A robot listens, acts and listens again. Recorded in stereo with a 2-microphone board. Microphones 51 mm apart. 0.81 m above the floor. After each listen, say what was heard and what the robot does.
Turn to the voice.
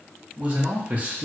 The man speaking: about 30° right or 150° right. Turn 30° right.
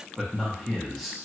Found it: a man speaking, straight ahead, under 1 m away.